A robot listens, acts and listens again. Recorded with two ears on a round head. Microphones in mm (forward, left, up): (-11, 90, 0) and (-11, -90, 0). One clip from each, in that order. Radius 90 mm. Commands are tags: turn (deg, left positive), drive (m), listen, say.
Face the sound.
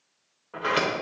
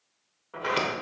<turn deg="-30"/>
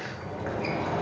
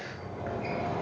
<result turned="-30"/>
<turn deg="25"/>
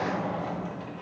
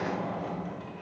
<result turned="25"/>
<say>Found it: a sliding door, straight ahead.</say>